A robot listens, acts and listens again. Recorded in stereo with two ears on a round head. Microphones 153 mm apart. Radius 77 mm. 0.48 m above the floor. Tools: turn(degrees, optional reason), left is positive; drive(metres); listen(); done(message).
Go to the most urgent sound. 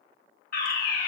turn(degrees=55, reason="The fire alarm: about 55° left or 125° left.")
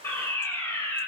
turn(degrees=15, reason="So it is at 15° left.")
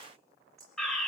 drive(metres=1.0)
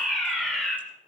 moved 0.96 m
drive(metres=1.0)
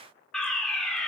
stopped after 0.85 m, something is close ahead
done("Arrived at the fire alarm, straight ahead.")